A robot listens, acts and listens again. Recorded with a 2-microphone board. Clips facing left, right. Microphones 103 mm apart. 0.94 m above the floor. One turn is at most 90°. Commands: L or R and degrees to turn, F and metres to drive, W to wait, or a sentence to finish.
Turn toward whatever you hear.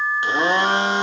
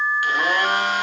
L25
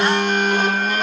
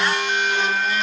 L90
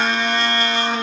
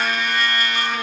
L30
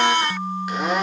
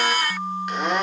Facing the blender.